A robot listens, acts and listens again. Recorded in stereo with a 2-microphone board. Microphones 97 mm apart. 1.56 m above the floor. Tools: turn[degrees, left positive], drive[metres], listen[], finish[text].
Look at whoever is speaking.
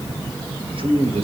Thought: The man speaking: about 70° right or 110° right.
Action: turn[-70]
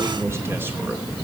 Action: listen[]
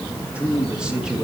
Thought: So it is at 10° right.
Action: turn[-10]
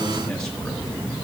Action: listen[]
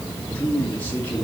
Thought: The man speaking is now 15° left.
Action: turn[15]
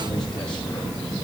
Action: listen[]
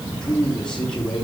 Thought: The man speaking is now 10° left.
Action: turn[10]
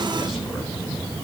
Action: listen[]
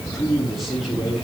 Action: finish[Found it: a man speaking, straight ahead, over 4 m away.]